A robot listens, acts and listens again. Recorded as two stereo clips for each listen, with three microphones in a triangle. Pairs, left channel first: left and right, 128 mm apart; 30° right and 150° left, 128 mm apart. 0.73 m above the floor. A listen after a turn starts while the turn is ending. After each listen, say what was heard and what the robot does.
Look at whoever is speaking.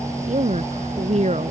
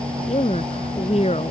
The woman speaking: 60° right. Turn 60° right.
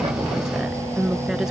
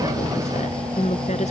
Found it: a woman speaking, straight ahead.